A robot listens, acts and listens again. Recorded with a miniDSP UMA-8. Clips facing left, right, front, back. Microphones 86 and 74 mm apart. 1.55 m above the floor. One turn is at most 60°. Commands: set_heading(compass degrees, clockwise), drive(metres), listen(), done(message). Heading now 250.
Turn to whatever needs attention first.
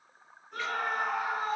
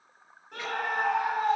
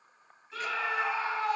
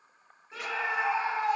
set_heading(310)
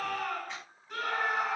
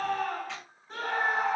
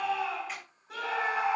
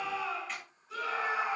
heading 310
set_heading(345)
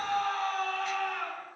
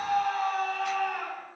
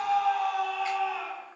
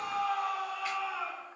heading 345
set_heading(0)
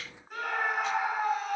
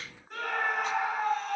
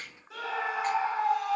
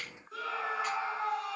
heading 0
done("Found it: a scream, straight ahead, over 4 m away.")